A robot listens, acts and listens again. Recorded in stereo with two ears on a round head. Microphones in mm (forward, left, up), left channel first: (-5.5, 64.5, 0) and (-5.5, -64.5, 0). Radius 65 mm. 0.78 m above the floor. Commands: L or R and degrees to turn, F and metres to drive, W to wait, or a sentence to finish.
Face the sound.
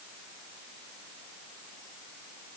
W
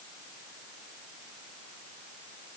W
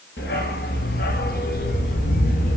L60
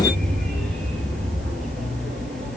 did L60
Facing the dog barking.